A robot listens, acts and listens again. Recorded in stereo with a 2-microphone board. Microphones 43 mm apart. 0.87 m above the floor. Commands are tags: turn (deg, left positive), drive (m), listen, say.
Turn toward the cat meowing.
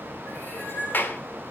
<turn deg="60"/>
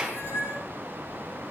<turn deg="60"/>
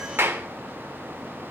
<listen/>
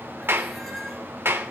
<listen/>
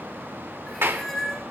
<say>Found it: a cat meowing, straight ahead.</say>